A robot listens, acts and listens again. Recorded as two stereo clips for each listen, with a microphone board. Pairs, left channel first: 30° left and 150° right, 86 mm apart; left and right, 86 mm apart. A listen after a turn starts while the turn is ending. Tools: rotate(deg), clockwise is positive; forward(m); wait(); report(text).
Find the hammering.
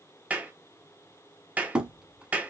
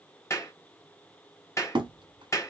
rotate(70)
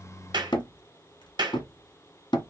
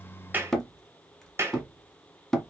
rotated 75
report("Facing the hammering, 1 to 2 m away.")